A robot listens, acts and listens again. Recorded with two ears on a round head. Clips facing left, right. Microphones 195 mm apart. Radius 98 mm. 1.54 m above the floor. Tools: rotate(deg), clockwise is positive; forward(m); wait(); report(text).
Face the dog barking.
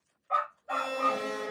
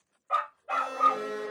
rotate(35)
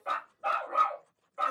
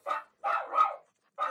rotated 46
rotate(-30)
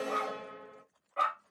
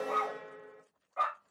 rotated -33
rotate(-35)
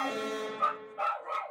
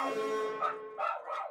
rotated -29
rotate(-45)
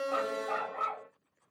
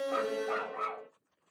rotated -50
report("Found it: a dog barking, straight ahead, 1 to 2 m away.")